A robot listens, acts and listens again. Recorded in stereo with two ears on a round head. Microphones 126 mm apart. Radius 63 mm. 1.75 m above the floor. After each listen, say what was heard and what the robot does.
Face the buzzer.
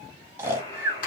The buzzer: about 30° left or 150° left. Turn 30° left.
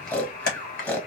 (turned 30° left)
So it is at 110° left. Turn 110° left.
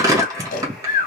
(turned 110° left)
Keep listening.
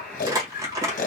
The buzzer is now 10° left. Turn 10° left.
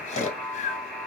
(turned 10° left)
Found it: a buzzer, straight ahead.